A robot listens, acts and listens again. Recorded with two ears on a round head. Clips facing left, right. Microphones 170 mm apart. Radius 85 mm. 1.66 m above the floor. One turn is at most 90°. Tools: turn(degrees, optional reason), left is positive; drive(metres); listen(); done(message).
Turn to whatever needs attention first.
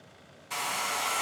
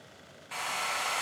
listen()
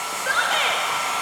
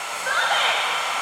turn(degrees=30, reason="The shout: about 30° left or 150° left.")
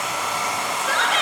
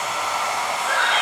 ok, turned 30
turn(degrees=90, reason="So it is at 120° left.")
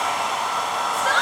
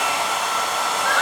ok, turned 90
turn(degrees=45, reason="The shout is now 45° left.")
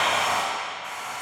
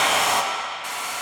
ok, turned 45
listen()
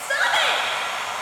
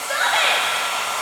turn(degrees=10, reason="The shout is now 10° left.")
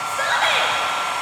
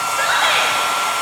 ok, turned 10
done("Facing the shout.")